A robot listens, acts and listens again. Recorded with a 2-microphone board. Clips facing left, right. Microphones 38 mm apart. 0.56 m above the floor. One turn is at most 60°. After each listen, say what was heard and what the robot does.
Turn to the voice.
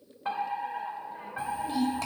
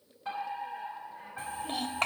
The child speaking: about 55° right or 125° right. Turn 55° right.
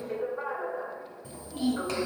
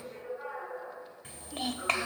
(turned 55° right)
So it is at 65° right. Turn 60° right.
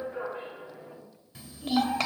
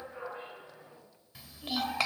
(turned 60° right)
Found it: a child speaking, straight ahead.